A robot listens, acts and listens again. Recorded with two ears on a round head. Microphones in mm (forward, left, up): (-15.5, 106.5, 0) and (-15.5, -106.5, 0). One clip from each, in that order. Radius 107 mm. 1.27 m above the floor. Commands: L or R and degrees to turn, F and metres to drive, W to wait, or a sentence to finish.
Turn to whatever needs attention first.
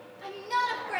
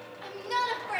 R30
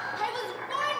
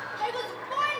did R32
L25
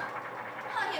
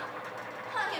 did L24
Facing the shout, over 4 m away.